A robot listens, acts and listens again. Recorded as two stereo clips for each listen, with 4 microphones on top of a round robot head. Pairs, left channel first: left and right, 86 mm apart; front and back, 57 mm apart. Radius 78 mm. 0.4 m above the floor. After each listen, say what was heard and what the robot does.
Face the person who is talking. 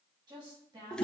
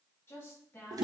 The woman speaking: 55° right. Turn 55° right.
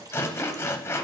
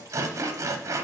Keep listening.
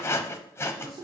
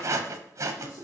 Keep listening.
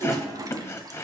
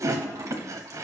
I heard a woman speaking from this way, but can't make it out now.